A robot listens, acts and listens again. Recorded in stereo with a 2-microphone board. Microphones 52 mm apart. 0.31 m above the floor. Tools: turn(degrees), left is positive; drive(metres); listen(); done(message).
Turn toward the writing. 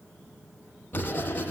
turn(degrees=35)
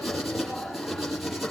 done("Facing the writing.")